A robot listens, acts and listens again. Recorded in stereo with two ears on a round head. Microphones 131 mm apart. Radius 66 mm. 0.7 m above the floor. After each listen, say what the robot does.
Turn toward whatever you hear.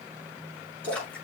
Turn 30° left.
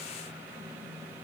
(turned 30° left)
Keep listening.
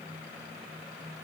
I heard a splash, but can't make it out now. It was about 20° right or 140° left.